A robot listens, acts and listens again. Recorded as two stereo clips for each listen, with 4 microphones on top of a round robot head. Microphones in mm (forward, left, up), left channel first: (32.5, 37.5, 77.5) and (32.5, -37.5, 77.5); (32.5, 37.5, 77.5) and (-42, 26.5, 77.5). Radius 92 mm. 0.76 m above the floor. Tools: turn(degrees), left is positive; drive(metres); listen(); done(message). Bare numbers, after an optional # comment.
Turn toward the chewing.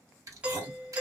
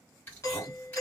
# The chewing: 60° right.
turn(-60)
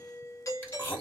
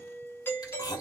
# The chewing is now 25° left.
turn(25)
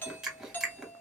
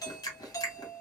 done("Found it: chewing, straight ahead.")